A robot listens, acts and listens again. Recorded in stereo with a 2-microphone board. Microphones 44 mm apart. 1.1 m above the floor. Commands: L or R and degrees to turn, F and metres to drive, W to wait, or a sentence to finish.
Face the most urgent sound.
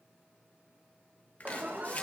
R50
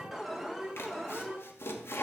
Found it: an alarm, straight ahead, 2 to 4 m away.